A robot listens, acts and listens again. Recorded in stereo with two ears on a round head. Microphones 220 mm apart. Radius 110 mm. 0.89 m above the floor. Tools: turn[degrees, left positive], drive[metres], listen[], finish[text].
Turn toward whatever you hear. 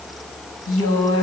Thought: The woman speaking: about 60° left or 120° left.
Action: turn[60]
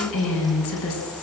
Thought: So it is at 60° left.
Action: turn[60]
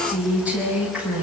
Action: finish[Facing the woman speaking, over 4 m away.]